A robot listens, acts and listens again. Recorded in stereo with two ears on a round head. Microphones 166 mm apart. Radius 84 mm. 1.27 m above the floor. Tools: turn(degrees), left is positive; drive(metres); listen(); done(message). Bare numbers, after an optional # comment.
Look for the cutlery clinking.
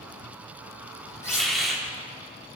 # The cutlery clinking: about 15° left or 165° left.
turn(15)
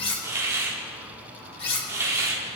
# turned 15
# So it is at 150° left.
turn(150)
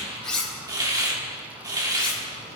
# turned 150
done("Found it: cutlery clinking, straight ahead.")